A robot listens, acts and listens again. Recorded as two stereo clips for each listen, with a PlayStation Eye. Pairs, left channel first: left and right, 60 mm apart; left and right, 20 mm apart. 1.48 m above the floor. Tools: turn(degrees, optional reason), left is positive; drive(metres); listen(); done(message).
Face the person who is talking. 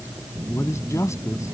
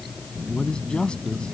turn(degrees=45, reason="The man speaking: about 45° left or 135° left.")
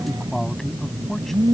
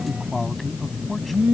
done("Facing the man speaking.")